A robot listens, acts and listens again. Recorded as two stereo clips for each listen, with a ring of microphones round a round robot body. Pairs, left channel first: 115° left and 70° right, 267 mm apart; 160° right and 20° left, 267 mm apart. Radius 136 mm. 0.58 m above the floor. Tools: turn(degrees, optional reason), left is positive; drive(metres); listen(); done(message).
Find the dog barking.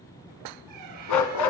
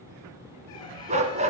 turn(degrees=90, reason="The dog barking: 90° left.")
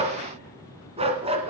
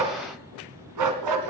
done("Found it: a dog barking, straight ahead.")